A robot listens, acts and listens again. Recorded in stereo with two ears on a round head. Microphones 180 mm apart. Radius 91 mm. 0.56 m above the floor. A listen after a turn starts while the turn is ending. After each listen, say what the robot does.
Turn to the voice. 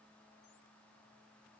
Keep listening.
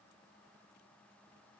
Keep listening.
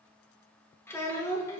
Turn 30° left.
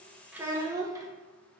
Turn 20° right.
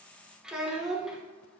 Facing the child speaking, under 1 m away.